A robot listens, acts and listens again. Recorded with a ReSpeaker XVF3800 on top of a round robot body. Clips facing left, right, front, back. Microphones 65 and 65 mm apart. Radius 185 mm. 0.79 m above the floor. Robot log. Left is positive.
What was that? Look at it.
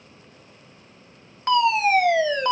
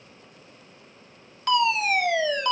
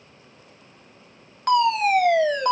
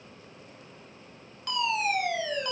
note: The fire alarm: 35° left.
cmd yaw +35
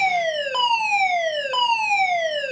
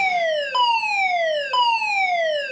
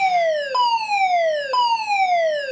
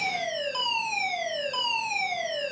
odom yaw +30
end: Facing the fire alarm, 2 to 4 m away.